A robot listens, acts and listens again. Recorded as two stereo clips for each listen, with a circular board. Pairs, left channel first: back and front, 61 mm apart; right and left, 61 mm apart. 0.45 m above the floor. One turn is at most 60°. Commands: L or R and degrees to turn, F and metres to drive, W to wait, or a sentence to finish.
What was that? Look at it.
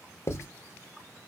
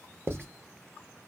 L60
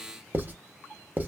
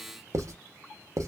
L60
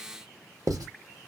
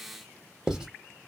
L15
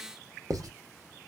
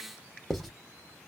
Found it: writing, straight ahead, under 1 m away.